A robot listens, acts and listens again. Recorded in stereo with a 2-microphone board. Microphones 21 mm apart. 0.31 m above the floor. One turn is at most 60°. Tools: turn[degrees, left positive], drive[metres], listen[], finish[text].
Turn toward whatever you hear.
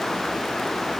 Action: listen[]
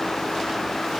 Action: listen[]
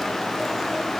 Action: finish[I can't make out anything.]